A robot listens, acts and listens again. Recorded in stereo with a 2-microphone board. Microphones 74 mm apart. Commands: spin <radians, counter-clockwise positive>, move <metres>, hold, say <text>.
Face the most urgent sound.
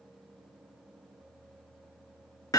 hold
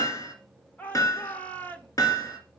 spin 0.35
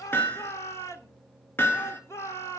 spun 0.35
spin 2.36
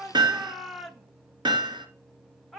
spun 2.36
say Found it: a shout, straight ahead.